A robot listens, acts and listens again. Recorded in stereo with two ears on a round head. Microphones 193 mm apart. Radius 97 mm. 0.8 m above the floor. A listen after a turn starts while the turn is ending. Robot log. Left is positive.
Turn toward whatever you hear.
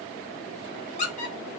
note: The squeak: about 30° left or 150° left.
cmd yaw +30
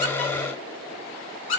note: So it is at 115° left.
cmd yaw +115
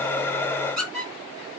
end: Found it: a squeak, straight ahead.